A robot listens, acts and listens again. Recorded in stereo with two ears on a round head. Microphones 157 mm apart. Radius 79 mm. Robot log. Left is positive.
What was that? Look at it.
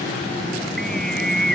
cmd yaw +30
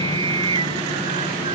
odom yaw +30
note: So it is at 30° right.
cmd yaw -30
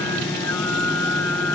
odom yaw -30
note: The singing is now 10° left.
cmd yaw +10
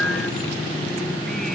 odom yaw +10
end: Found it: singing, straight ahead.